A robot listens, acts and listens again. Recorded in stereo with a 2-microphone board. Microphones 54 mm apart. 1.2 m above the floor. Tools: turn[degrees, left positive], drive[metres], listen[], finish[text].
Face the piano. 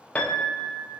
Thought: The piano: about 20° left or 160° left.
Action: turn[20]
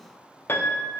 Thought: So it is at 135° left.
Action: turn[135]
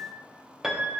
Action: finish[Facing the piano, under 1 m away.]